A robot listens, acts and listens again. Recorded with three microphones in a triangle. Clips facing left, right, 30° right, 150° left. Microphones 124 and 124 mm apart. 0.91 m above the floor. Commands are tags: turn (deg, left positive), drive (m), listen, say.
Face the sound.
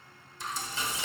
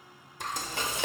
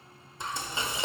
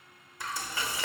<turn deg="-95"/>
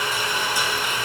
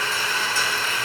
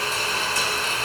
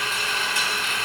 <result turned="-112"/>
<turn deg="15"/>
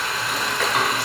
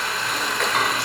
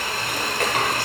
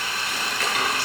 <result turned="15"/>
<say>Found it: frying, straight ahead, 1 to 2 m away.</say>